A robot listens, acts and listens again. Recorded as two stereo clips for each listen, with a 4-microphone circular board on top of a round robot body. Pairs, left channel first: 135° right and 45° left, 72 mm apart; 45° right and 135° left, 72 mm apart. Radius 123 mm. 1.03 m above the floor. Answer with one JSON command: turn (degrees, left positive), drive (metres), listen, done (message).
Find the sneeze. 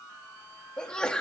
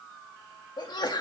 {"turn": -55}
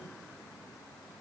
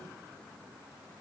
{"done": "I heard a sneeze from this way, but can't make it out now."}